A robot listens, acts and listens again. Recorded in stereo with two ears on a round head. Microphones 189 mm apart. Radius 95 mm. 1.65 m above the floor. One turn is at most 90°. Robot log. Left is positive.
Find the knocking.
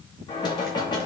note: The knocking: about 20° left or 160° left.
cmd yaw +20
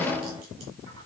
end: Found it: knocking, straight ahead, 2 to 4 m away.